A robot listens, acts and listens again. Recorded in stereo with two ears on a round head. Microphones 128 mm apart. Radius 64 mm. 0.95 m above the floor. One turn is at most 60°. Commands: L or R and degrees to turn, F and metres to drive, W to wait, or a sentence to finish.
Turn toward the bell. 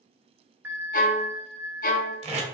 R15
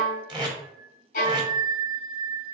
R60
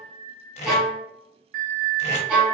R60
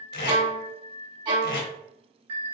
R40
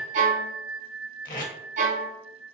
Found it: a bell, straight ahead, under 1 m away.